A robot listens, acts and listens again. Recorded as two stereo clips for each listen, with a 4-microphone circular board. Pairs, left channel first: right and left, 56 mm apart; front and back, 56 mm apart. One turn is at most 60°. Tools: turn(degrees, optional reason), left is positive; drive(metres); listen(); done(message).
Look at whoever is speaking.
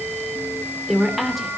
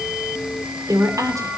turn(degrees=60, reason="The woman speaking: 175° left.")
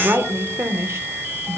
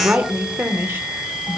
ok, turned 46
turn(degrees=60, reason="The woman speaking is now 130° left.")
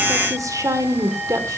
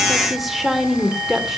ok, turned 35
turn(degrees=60, reason="The woman speaking is now 95° left.")
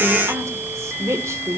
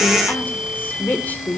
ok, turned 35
turn(degrees=60, reason="The woman speaking is now 60° left.")
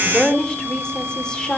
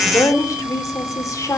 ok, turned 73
turn(degrees=-15, reason="The woman speaking is now 15° right.")
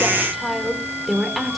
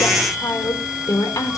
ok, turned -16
done("Found it: a woman speaking, straight ahead.")